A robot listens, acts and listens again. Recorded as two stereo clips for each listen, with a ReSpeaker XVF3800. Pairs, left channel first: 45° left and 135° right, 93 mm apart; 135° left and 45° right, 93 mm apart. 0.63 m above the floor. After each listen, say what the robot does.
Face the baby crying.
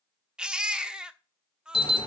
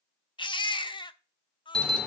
Turn 145° left.
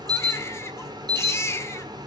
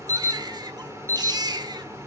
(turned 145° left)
Turn 10° right.
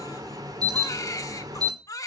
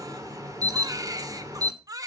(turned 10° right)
Facing the baby crying, under 1 m away.